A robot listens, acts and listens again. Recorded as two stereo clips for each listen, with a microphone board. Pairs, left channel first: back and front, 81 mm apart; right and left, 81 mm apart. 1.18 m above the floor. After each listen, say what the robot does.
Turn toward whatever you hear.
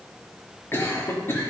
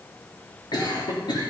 Turn 120° right.
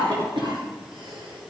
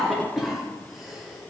Found it: a cough, straight ahead, 2 to 4 m away.